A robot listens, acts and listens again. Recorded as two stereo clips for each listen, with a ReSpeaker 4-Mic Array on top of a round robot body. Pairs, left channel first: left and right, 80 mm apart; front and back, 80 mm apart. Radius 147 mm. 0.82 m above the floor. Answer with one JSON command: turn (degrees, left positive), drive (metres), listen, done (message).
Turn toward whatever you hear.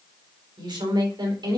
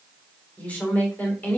{"turn": -65}
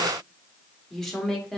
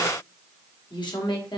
{"done": "Found it: a woman speaking, straight ahead, 2 to 4 m away."}